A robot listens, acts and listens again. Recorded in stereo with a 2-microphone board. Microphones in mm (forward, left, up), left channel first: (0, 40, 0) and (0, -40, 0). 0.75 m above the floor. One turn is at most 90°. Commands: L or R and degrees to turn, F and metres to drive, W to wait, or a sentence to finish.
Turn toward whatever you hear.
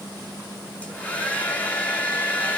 L20
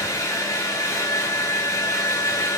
L90
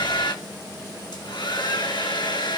L70
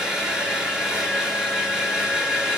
R10
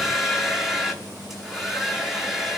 Facing the hair dryer.